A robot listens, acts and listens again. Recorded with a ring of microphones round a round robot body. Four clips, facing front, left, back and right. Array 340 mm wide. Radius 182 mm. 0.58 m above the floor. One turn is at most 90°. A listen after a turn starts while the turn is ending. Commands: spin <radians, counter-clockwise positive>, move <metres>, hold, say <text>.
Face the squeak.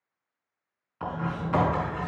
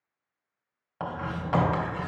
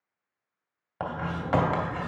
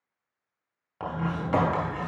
spin -1.57
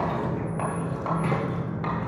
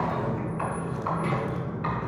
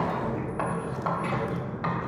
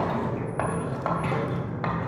spin -0.52
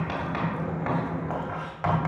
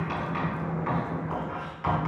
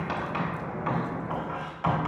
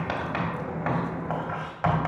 say Found it: a squeak, straight ahead, 2 to 4 m away.